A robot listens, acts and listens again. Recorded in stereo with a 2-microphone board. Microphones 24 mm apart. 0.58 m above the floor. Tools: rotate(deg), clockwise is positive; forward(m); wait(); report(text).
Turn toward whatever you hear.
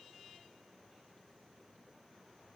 wait()
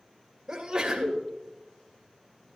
rotate(20)
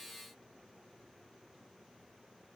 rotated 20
wait()
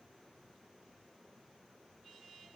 report("I heard a sneeze, but can't make it out now. It was about straight ahead or 140° right.")